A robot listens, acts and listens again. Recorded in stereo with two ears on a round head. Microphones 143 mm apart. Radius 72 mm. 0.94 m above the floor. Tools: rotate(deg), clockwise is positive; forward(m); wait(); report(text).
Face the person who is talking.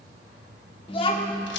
rotate(-35)
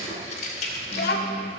rotate(-110)
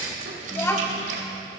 rotate(-15)
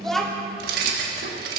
report("Facing the child speaking, 1 to 2 m away.")